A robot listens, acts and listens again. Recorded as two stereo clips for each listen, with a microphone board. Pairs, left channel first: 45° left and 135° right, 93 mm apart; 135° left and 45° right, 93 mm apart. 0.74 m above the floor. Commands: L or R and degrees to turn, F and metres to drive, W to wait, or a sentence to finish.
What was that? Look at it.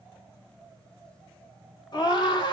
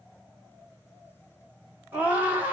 L20
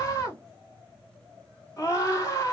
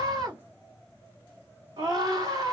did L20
Found it: a scream, straight ahead.